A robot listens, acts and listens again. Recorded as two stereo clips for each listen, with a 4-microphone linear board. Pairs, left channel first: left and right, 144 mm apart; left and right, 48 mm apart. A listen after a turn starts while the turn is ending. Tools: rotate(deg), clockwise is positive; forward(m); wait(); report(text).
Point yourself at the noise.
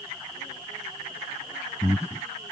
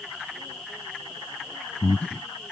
rotate(-20)
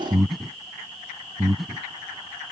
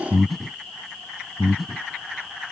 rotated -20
report("Facing the breathing.")